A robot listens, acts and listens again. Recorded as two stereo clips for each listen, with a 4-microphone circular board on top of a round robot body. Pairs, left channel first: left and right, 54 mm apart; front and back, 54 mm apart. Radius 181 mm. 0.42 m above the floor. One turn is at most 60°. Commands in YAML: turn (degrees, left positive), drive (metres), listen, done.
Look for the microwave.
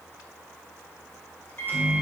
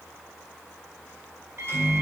turn: 60
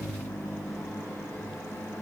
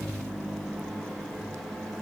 turn: 60
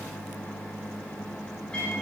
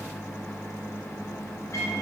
turn: 15
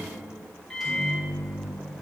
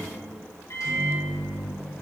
done: "Found it: a microwave, straight ahead, 2 to 4 m away."